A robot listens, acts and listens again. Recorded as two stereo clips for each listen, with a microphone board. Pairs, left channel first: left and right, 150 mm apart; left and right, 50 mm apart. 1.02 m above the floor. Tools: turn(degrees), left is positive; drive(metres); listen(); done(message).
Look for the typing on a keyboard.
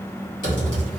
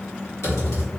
turn(degrees=60)
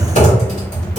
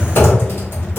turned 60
turn(degrees=50)
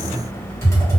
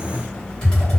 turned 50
turn(degrees=20)
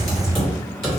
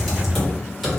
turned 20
done("Found it: typing on a keyboard, straight ahead.")